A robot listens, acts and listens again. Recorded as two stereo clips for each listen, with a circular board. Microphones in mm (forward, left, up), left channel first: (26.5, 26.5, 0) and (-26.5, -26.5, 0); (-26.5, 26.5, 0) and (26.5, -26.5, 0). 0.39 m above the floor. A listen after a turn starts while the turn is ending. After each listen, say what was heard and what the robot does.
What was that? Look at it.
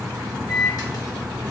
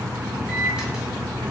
The microwave: 30° left. Turn 30° left.
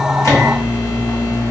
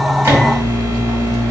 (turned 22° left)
The microwave is now 10° left. Turn 10° left.
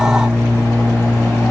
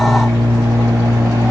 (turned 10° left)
Found it: a microwave, straight ahead.